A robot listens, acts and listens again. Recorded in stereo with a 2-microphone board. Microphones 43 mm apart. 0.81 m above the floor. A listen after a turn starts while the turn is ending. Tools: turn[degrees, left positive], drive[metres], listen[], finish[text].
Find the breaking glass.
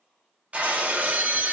Thought: The breaking glass: about 30° right or 150° right.
Action: turn[-30]
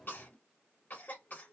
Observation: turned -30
Action: listen[]
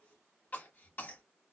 Action: finish[I heard breaking glass, but can't make it out now. It was about straight ahead or 120° right.]